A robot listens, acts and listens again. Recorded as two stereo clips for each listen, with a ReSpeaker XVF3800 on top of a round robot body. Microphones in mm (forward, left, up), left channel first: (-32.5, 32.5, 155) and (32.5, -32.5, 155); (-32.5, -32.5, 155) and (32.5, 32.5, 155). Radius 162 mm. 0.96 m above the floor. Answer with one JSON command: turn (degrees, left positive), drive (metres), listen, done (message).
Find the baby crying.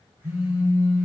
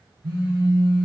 {"listen": true}
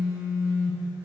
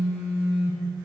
{"listen": true}
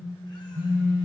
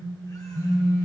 {"done": "I can't make out a baby crying, only a phone buzzing."}